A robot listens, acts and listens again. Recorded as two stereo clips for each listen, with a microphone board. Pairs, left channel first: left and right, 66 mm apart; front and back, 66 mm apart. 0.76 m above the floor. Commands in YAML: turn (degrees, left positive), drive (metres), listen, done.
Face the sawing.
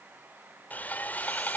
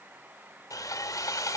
turn: 25
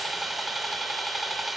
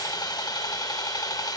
done: "Found it: sawing, straight ahead."